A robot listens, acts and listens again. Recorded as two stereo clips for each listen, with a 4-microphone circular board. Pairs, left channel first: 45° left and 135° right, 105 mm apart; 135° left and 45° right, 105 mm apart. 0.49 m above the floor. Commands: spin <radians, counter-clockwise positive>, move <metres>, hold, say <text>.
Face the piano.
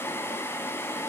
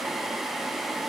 hold
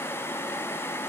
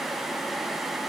hold
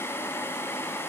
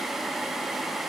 say I can't make out a piano.